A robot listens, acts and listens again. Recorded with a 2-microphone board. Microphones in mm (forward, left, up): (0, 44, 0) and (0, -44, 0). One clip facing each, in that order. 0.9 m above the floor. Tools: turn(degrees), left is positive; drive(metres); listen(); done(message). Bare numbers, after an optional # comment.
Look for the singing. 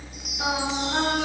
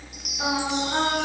turn(-30)
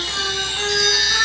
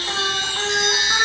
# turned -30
listen()
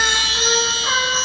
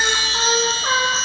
# So it is at 130° right.
turn(-130)
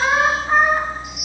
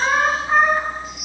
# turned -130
# The singing is now 15° left.
turn(15)
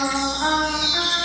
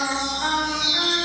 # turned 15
# The singing is now 25° left.
turn(25)
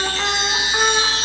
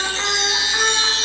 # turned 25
# The singing is now 10° left.
turn(10)
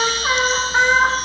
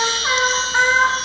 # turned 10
done("Facing the singing.")